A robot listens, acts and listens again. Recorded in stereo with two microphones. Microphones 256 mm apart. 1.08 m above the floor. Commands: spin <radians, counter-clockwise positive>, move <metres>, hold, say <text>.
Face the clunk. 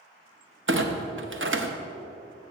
spin -0.87
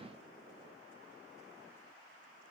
hold
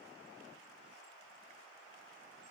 say I heard a clunk, but can't make it out now. It was about straight ahead or 80° right.